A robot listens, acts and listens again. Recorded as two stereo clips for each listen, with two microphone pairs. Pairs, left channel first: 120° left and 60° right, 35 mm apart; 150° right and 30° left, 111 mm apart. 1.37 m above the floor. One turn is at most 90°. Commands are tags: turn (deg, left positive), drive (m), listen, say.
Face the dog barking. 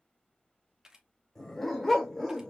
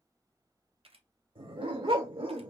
<turn deg="30"/>
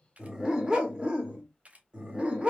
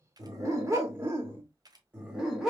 <turn deg="-50"/>
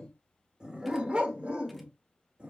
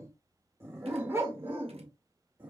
<turn deg="-35"/>
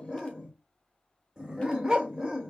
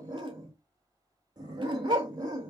<say>Found it: a dog barking, straight ahead, 1 to 2 m away.</say>